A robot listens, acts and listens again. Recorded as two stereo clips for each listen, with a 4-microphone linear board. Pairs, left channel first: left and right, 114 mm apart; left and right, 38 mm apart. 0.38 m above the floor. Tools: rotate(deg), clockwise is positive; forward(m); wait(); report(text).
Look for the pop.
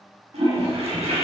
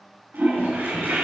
wait()
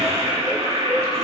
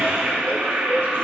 wait()
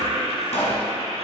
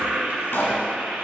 rotate(-90)
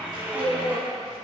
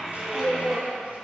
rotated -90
report("I heard a pop from this way, but can't make it out now.")